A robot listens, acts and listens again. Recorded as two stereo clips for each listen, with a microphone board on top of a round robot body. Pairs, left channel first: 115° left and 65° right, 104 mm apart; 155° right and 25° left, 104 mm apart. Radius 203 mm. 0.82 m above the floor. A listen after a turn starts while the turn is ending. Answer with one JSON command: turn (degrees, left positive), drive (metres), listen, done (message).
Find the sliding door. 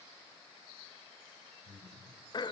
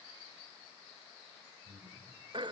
{"listen": true}
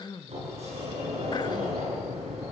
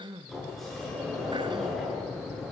{"turn": -70}
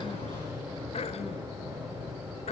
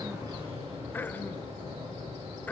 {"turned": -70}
{"done": "Facing the sliding door."}